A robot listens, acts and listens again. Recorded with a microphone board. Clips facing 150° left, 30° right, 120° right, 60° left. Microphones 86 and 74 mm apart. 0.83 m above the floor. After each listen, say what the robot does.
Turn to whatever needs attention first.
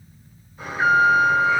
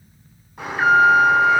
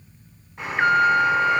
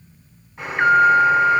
Turn 30° right.
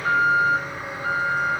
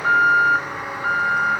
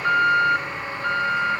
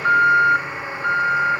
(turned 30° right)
Turn 20° right.
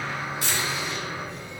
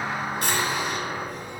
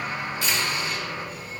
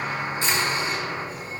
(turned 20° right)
Found it: an alarm, straight ahead.